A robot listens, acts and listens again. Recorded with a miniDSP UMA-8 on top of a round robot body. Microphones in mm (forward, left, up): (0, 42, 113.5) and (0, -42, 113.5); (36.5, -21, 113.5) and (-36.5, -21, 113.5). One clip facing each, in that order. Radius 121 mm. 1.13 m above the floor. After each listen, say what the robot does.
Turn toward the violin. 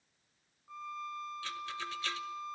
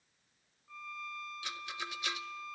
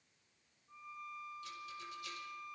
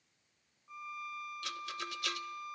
Turn 155° left.
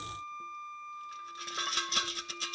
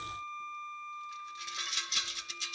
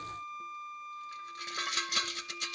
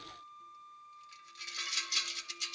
Turn 10° left.
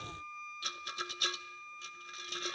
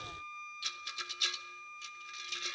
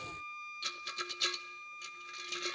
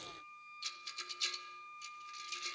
Found it: a violin, straight ahead.